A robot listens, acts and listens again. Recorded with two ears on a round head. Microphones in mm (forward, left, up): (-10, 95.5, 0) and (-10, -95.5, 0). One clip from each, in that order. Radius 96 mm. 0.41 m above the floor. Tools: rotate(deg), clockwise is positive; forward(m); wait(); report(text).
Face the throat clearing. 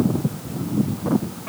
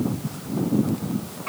wait()
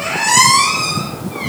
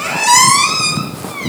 wait()
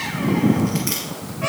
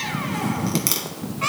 report("I can't make out throat clearing to turn to.")